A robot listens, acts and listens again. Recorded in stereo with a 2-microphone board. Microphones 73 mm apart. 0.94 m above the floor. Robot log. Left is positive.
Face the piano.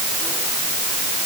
cmd idle
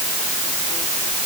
cmd idle
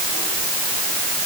end: I can't make out a piano.